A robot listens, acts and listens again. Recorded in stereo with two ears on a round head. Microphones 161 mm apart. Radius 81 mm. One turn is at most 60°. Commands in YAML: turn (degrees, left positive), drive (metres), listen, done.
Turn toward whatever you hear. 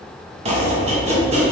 turn: -35
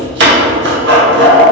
turn: -60
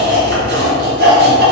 turn: -60
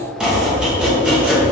done: "Facing the chopping, 1 to 2 m away."